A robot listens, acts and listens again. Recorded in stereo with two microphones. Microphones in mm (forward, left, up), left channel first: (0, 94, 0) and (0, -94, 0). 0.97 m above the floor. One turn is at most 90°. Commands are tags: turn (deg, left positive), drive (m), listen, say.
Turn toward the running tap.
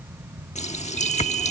<turn deg="40"/>
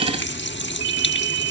<turn deg="90"/>
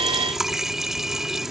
<say>Found it: a running tap, straight ahead.</say>